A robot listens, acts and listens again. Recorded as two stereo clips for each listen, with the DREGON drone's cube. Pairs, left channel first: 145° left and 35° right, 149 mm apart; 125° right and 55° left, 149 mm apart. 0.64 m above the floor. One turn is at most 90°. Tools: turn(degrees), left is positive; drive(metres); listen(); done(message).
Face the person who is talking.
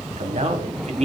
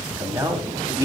done("Found it: a man speaking, straight ahead, 1 to 2 m away.")